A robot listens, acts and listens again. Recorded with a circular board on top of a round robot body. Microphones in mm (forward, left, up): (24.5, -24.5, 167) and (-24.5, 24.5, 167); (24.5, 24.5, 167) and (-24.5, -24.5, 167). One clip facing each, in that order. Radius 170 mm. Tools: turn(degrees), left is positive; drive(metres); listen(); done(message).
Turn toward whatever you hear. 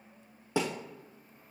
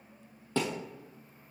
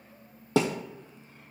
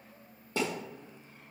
turn(degrees=35)
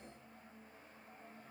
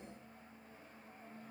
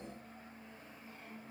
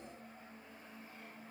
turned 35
done("Facing where the thud came from. I can't hear it now.")